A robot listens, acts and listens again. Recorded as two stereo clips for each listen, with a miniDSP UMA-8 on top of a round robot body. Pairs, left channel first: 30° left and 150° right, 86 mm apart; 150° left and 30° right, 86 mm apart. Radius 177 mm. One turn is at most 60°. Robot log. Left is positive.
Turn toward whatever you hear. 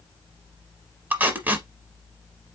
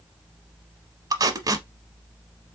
note: The tape being pulled: 80° right.
cmd yaw -60
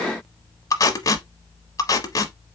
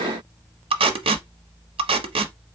note: The tape being pulled is now 20° right.
cmd yaw -20
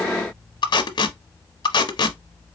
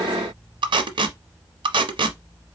end: Facing the tape being pulled, under 1 m away.